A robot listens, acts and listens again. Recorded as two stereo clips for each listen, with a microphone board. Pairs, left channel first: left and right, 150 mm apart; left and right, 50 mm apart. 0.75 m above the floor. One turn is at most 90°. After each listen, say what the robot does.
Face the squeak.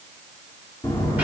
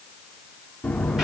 Keep listening.
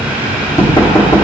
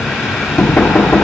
Keep listening.
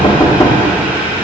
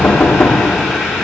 I can't make out a squeak, only knocking and boiling.